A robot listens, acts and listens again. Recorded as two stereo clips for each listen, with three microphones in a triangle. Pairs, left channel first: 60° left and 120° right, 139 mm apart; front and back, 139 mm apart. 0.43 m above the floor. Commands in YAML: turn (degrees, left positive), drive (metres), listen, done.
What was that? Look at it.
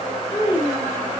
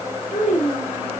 done: "Found it: a child speaking, straight ahead."